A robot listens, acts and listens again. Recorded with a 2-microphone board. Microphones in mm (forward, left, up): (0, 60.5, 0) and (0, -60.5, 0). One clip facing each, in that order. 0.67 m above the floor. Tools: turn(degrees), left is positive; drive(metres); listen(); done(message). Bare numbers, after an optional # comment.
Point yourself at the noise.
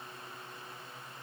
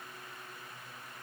listen()
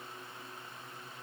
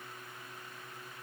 listen()
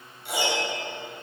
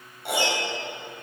# The piano: about 70° right or 110° right.
turn(-70)
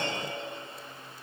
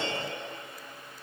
listen()
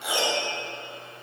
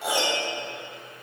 # So it is at 40° right.
turn(-40)
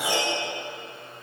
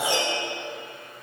# The piano is now 30° right.
turn(-30)
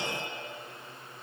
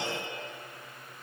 listen()
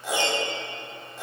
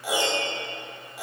# The piano is now 10° right.
turn(-10)
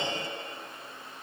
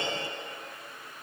listen()
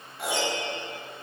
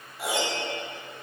done("Facing the piano, 2 to 4 m away.")